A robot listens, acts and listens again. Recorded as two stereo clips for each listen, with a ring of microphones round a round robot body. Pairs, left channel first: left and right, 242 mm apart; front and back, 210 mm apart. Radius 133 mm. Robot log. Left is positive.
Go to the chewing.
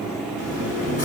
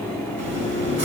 note: The chewing: 150° left.
cmd yaw +150
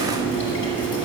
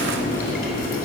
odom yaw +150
note: The chewing is now 50° left.
cmd yaw +50
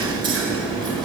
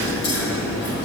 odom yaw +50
note: The chewing is now 15° right.
cmd yaw -15
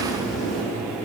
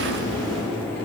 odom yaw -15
cmd fwd 1.0
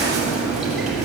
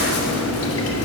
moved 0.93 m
cmd fwd 1.0
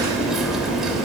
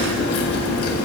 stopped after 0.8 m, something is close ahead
end: Arrived at the chewing, straight ahead.